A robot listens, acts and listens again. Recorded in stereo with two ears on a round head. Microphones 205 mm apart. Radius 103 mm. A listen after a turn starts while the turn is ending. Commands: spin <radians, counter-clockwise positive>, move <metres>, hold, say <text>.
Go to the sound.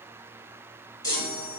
spin 0.35
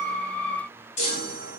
spin 2.44
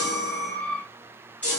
move 1.0
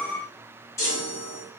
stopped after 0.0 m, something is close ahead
spin 0.26
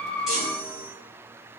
say Blocked. The chime is further on, straight ahead.